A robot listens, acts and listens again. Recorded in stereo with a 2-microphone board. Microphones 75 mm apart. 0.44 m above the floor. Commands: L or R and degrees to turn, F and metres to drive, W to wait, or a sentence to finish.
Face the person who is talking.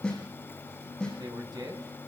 R70
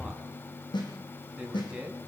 R15
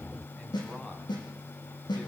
W
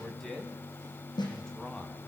Found it: a man speaking, straight ahead.